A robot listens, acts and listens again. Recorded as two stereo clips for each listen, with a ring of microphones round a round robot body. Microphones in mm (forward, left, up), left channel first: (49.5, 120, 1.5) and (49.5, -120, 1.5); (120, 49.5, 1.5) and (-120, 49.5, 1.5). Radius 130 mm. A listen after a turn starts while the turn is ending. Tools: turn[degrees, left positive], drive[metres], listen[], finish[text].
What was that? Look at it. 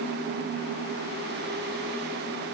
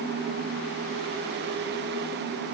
Action: listen[]
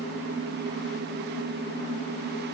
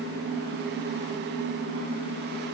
Action: listen[]
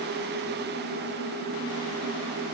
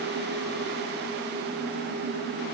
Action: finish[I can't make out anything.]